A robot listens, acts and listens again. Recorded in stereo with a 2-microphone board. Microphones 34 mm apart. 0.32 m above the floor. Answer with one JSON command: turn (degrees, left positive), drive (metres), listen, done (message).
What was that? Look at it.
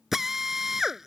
{"turn": -30}
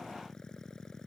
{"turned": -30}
{"listen": true}
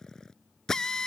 {"turn": 20}
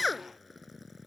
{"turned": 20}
{"done": "Facing the drill."}